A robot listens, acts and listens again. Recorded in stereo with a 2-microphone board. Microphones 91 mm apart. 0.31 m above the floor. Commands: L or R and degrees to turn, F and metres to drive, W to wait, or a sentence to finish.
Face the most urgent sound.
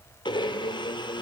W
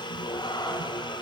W
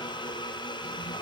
I can't make out anything urgent to turn to.